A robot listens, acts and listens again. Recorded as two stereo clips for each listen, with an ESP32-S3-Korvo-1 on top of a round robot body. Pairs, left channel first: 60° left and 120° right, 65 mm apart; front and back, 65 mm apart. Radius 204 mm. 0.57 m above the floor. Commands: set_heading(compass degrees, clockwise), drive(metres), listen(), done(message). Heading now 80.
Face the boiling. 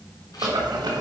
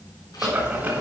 set_heading(200)
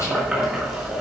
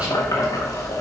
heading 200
set_heading(240)
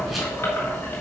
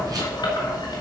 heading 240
done("Facing the boiling.")